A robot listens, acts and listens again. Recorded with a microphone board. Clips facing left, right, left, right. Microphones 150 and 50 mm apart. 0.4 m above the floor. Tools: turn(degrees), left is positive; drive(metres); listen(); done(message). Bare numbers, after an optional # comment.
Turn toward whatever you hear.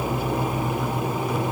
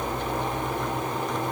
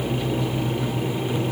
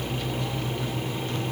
listen()
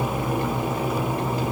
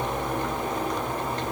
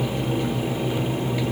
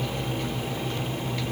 listen()
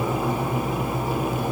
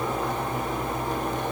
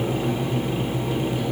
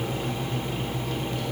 done("I can't make out anything to turn to.")